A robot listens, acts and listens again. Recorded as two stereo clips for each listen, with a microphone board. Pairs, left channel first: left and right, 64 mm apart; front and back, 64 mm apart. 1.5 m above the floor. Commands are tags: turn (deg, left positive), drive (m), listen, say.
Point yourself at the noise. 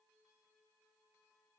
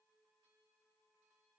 <listen/>
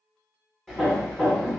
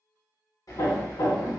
<turn deg="10"/>
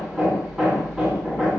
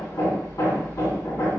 <say>Facing the hammering, 1 to 2 m away.</say>